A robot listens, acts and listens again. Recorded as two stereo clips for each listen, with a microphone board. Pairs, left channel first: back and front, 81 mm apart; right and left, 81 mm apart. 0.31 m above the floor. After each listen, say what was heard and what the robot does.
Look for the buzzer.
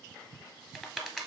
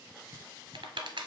Keep listening.
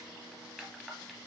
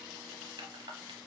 Keep listening.
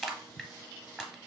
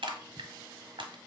I can't make out a buzzer to turn to.